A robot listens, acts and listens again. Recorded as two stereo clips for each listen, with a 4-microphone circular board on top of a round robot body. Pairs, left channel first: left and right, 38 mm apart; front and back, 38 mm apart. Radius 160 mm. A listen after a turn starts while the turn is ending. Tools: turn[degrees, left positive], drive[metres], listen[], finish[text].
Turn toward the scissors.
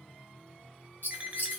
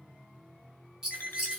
Thought: The scissors: 105° left.
Action: turn[105]
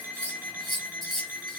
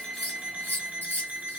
Action: finish[Facing the scissors.]